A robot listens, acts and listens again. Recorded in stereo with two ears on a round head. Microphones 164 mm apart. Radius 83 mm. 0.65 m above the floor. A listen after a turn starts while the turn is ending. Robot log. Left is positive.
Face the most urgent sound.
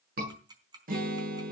note: The scream: about 55° right or 125° right.
cmd yaw -55
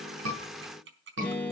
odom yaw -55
note: So it is at 70° right.
cmd yaw -70
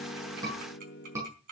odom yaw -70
note: The scream is now 15° right.
cmd yaw -15
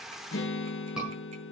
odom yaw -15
end: Found it: a scream, straight ahead.